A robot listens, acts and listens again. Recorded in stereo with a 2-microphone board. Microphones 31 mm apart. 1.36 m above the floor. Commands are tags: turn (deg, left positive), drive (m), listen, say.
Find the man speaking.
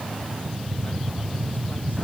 <listen/>
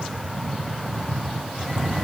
<listen/>
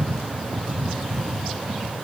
<say>I can't make out a man speaking to turn to.</say>